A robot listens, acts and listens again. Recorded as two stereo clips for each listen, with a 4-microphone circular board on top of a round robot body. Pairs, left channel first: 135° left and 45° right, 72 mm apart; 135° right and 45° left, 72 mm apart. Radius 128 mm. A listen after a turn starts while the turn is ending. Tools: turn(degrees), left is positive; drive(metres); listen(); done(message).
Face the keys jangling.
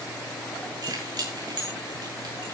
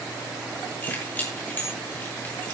turn(degrees=-70)
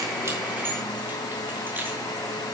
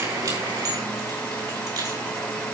turn(degrees=15)
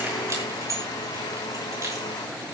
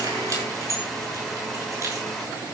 done("Found it: keys jangling, straight ahead, over 4 m away.")